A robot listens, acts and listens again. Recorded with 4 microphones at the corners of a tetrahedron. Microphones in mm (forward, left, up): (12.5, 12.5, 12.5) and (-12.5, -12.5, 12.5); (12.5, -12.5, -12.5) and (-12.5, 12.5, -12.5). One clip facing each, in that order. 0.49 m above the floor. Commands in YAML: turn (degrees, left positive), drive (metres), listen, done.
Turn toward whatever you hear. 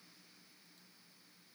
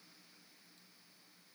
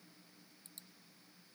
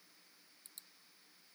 listen: true
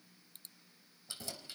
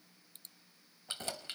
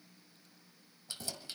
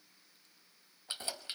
turn: -165
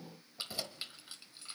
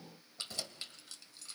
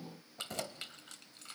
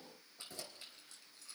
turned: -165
turn: -15
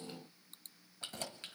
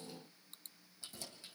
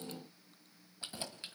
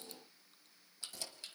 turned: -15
turn: 20
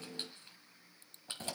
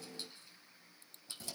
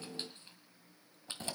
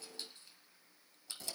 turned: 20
done: "Facing the keys jangling, 1 to 2 m away."